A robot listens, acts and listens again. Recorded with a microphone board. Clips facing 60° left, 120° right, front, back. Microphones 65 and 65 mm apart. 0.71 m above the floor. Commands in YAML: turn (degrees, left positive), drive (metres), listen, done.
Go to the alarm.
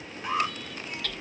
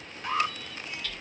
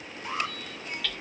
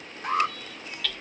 turn: 135
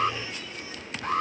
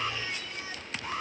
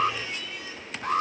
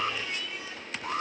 turn: 20
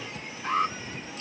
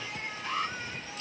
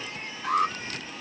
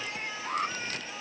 drive: 1.0
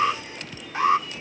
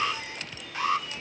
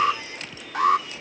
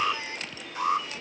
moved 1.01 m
drive: 1.0
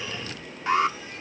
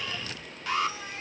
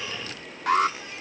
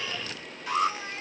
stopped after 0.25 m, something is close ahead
done: "I am next to the alarm."